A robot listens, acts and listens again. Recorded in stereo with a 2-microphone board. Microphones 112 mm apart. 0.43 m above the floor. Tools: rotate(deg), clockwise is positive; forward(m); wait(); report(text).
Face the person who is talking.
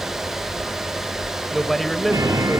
rotate(-30)
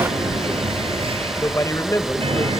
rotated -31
rotate(-150)
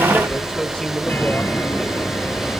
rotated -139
rotate(-10)
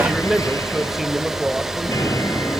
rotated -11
report("Facing the man speaking, 1 to 2 m away.")